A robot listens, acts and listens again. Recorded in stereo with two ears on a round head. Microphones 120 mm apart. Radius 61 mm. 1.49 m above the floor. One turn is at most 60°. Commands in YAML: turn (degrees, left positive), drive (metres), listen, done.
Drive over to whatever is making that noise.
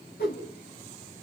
turn: 60
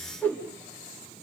turn: 10
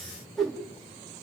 drive: 1.0
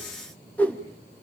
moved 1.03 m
turn: 10
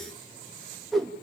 drive: 1.0
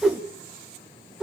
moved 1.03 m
drive: 1.0
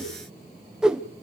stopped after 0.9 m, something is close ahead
done: "I am next to the whoosh."